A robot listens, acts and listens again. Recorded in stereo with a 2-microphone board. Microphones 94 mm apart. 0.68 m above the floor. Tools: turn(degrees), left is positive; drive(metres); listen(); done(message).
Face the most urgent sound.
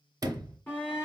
turn(degrees=20)
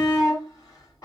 turn(degrees=135)
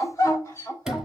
turn(degrees=35)
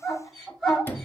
done("Found it: a shout, straight ahead.")